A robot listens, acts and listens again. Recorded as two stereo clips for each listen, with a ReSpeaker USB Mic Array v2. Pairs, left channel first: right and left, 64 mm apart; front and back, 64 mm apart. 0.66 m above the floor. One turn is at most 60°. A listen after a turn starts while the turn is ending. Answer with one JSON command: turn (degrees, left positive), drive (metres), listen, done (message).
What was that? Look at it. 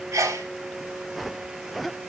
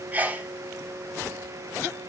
{"turn": 60}
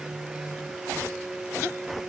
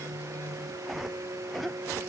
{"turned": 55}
{"turn": 60}
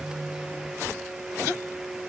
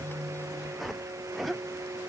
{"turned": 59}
{"done": "I heard a sneeze from this way, but can't make it out now."}